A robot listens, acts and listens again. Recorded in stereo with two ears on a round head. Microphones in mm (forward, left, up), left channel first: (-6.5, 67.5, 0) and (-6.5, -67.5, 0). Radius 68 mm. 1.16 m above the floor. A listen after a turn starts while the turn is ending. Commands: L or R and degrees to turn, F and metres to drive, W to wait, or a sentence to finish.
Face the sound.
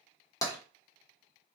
L20
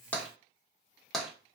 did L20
Facing the tapping, under 1 m away.